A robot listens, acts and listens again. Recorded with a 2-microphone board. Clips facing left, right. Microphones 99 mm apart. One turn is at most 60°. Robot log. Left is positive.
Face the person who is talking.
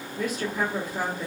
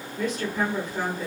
cmd yaw +30
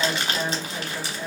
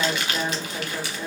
note: So it is at 20° right.
cmd yaw -20
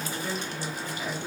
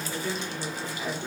end: Facing the woman speaking, 1 to 2 m away.